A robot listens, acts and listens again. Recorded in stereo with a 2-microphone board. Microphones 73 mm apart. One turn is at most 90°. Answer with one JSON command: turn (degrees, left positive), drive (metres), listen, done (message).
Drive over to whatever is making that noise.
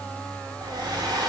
{"turn": -75}
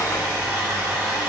{"turn": -20}
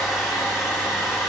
{"drive": 1.0}
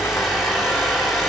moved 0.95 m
{"drive": 1.0}
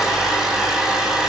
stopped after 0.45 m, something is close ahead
{"done": "Arrived at the hair dryer, straight ahead."}